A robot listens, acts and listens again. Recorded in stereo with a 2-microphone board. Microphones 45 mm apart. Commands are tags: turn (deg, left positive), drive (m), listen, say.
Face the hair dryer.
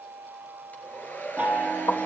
<turn deg="40"/>
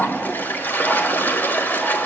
<listen/>
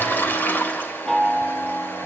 <listen/>
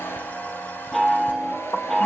<say>I heard a hair dryer, but can't make it out now. It was about straight ahead or 100° left.</say>